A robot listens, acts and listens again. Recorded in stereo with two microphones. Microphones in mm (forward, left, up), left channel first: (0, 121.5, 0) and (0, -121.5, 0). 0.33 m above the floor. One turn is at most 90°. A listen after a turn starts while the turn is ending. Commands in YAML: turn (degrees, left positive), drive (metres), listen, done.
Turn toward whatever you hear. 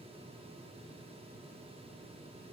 listen: true
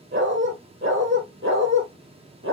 turn: -50
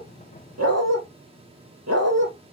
turn: -80
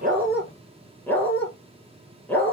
done: "Found it: a dog barking, straight ahead."